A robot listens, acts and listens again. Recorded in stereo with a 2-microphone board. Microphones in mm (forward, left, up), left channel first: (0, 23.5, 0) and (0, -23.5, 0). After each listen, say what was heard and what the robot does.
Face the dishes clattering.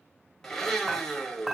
Turn 30° right.
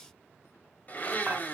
Keep listening.
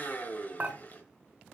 So it is at 140° right. Turn 140° right.
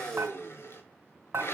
The dishes clattering is now 65° right. Turn 65° right.
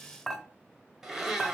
The dishes clattering is now 10° left. Turn 10° left.
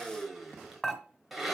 Facing the dishes clattering, 1 to 2 m away.